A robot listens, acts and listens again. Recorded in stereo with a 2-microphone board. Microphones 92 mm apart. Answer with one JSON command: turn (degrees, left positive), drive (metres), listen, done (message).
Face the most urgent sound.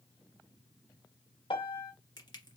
{"listen": true}
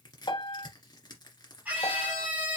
{"turn": -15}
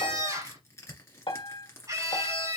{"turn": -145}
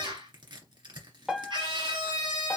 {"turn": -60}
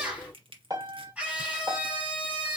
{"turn": -15}
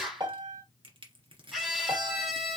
{"done": "Found it: a scream, straight ahead."}